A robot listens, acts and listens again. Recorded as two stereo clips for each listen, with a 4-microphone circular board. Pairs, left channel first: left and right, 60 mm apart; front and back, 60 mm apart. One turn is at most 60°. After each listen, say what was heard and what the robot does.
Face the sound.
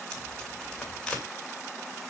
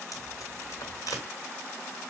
The tape being pulled: 15° left. Turn 15° left.
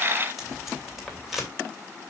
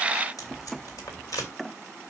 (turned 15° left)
Facing the tape being pulled.